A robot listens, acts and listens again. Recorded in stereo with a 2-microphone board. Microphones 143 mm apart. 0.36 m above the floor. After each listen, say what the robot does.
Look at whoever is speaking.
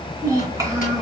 Turn 25° right.
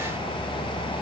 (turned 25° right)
Keep listening.
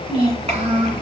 Turn 130° right.
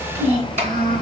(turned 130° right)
Turn 55° right.
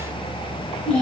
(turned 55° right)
Facing the child speaking, 2 to 4 m away.